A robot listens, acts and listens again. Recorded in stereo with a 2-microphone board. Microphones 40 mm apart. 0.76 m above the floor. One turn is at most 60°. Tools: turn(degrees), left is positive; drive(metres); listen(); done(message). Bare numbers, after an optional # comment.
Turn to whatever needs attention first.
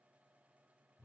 listen()
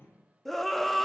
turn(30)
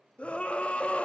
# So it is at 145° left.
turn(60)
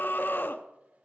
# The scream is now 80° left.
turn(60)
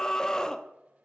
# The scream is now 20° left.
turn(20)
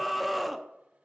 done("Found it: a scream, straight ahead.")